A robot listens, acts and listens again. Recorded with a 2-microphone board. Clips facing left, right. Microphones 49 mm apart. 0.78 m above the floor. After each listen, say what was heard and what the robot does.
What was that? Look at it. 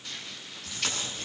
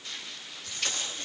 Turn 90° left.
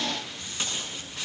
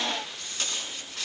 So it is at 10° left. Turn 10° left.
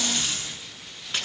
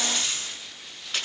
Found it: tape being pulled, straight ahead, over 4 m away.